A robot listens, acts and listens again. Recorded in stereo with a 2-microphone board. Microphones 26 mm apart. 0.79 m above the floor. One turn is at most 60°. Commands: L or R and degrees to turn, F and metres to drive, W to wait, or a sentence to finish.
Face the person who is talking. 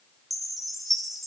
W
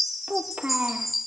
R60
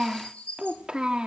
R40
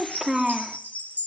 R20
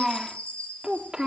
R30
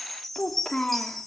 L30
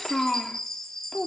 L15
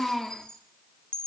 Found it: a child speaking, straight ahead, 1 to 2 m away.